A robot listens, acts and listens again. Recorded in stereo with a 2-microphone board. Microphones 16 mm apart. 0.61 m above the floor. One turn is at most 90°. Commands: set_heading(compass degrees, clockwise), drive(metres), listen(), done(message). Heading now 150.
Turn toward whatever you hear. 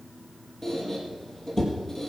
set_heading(125)
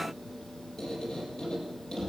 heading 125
set_heading(35)
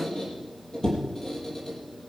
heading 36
set_heading(1)
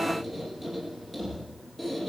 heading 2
done("Found it: a squeak, straight ahead.")